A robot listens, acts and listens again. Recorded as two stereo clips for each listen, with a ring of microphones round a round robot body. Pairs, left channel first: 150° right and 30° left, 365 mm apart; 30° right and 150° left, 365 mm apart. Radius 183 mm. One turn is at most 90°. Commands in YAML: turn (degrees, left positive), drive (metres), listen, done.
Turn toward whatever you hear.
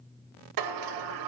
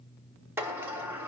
turn: 65
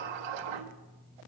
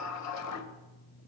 turn: 20
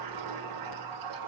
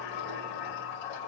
done: "Facing the sliding door."